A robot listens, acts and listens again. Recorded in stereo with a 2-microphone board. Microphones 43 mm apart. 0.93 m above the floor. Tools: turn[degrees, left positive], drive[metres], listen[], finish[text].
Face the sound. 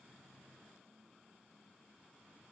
Action: listen[]
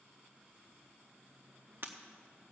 Thought: The breaking glass: about 50° right or 130° right.
Action: turn[-50]
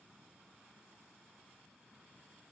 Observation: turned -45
Action: listen[]
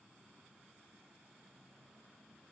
Action: finish[I heard breaking glass, but can't make it out now. It was about 5° right or 85° right.]